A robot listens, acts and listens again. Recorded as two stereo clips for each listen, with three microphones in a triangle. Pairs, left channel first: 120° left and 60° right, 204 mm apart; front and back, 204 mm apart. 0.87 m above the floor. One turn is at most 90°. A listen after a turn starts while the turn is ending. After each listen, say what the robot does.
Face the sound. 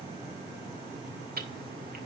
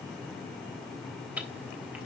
Keep listening.
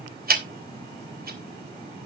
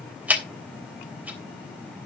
Turn 90° right.
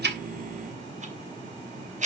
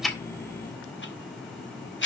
Turn 10° right.
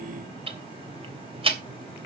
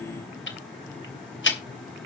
Found it: ticking, straight ahead, 2 to 4 m away.